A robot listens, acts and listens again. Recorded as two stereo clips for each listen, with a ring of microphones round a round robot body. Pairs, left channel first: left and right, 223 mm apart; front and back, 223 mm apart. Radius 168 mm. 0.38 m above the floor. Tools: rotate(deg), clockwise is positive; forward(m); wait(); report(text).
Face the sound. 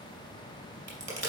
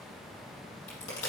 rotate(55)
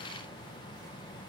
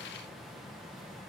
report("Facing where the crack came from. I can't hear it now.")